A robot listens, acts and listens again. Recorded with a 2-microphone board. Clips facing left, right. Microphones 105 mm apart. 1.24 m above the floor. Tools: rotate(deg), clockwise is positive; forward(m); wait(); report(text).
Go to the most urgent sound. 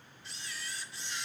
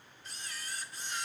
wait()
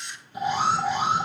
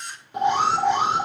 rotate(90)
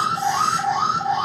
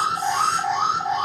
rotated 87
forward(1.0)
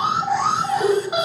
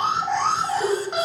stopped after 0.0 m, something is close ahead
report("Blocked. The alarm is further on, straight ahead.")